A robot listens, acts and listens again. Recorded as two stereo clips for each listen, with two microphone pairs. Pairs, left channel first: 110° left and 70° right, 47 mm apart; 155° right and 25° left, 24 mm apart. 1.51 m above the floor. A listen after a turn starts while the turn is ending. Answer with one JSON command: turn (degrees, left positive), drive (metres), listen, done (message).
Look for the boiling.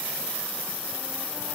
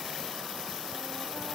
{"listen": true}
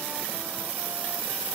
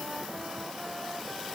{"listen": true}
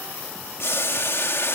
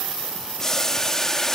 {"turn": 130}
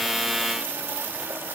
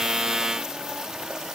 {"listen": true}
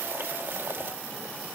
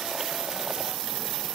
{"listen": true}
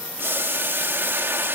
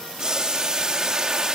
{"turn": -35}
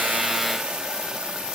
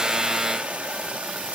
{"listen": true}
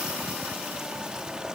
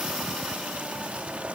{"listen": true}
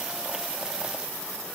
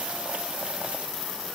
{"done": "I heard boiling from this way, but can't make it out now."}